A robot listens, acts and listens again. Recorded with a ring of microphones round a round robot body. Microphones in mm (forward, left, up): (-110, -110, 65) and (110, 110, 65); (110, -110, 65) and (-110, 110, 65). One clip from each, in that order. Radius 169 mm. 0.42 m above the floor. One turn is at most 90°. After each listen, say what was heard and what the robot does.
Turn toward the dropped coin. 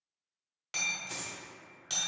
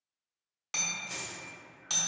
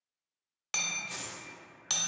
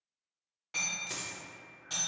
The dropped coin: 145° left. Turn 90° left.
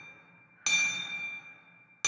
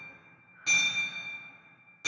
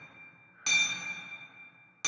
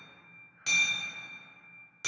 Nothing new. It was at 55° left. Turn 55° left.
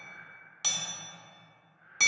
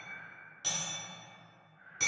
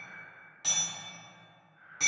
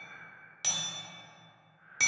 Facing where the dropped coin came from. I can't hear it now.